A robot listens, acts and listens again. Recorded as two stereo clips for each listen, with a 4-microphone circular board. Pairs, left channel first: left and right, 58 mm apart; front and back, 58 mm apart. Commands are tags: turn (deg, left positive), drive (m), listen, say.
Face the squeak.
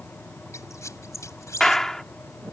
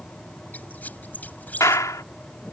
<turn deg="60"/>
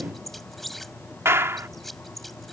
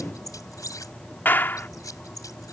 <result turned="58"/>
<say>Facing the squeak.</say>